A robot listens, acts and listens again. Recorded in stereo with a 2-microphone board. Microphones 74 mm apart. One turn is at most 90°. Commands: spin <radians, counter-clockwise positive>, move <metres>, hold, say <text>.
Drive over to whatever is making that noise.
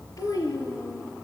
spin 0.87
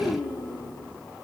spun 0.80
spin 1.48
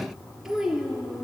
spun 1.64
move 1.0
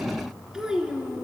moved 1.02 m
spin -0.17
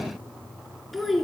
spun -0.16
move 1.0
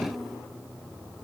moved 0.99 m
move 1.0
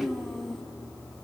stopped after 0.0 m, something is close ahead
say Arrived at the child speaking, straight ahead.